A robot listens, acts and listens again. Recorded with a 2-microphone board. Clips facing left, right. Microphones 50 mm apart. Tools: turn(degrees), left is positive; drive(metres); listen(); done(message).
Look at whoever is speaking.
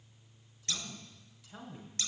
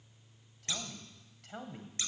turn(degrees=-60)
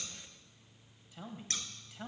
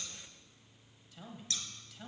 turn(degrees=25)
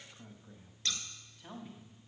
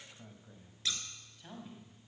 done("Found it: a man speaking, straight ahead, 2 to 4 m away.")